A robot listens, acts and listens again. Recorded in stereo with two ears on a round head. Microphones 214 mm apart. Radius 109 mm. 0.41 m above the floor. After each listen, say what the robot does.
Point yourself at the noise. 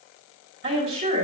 Turn 45° right.
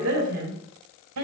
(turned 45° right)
Turn 85° right.
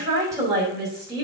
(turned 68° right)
Turn 20° right.
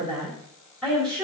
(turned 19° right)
Facing the woman speaking, over 4 m away.